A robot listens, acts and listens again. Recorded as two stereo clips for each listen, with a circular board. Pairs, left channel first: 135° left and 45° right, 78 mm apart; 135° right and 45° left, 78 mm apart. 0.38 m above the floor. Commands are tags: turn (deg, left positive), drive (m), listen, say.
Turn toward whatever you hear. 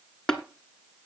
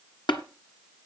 <turn deg="-140"/>
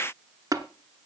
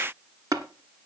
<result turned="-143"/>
<say>Facing the tapping.</say>